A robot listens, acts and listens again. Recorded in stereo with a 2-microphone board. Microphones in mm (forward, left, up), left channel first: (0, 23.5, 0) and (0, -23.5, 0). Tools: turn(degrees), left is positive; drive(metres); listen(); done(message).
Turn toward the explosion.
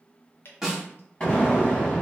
turn(degrees=20)
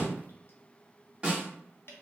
done("Facing the explosion, 1 to 2 m away.")